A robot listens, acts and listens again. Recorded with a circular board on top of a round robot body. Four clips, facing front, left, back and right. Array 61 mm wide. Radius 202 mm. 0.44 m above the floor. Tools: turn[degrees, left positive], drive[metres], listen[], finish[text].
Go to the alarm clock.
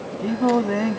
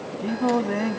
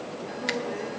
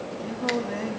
Action: listen[]
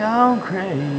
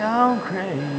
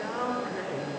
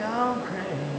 Action: listen[]
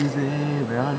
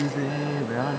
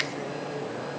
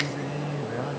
Action: finish[I can't make out an alarm clock to turn to.]